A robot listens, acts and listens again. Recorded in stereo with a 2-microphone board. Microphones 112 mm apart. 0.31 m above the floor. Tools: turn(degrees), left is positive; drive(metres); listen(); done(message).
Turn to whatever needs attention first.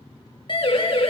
turn(degrees=45)
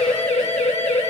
turn(degrees=90)
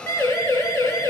turn(degrees=30)
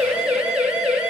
done("Found it: a siren, straight ahead, over 4 m away.")